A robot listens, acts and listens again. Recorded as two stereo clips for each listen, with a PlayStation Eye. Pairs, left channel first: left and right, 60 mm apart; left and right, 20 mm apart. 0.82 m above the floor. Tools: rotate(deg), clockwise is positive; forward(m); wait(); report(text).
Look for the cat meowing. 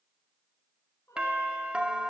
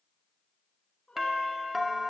rotate(-55)
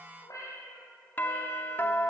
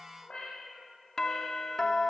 rotate(-60)
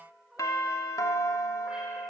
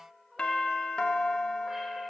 rotate(15)
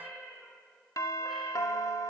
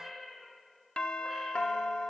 report("Facing the cat meowing, over 4 m away.")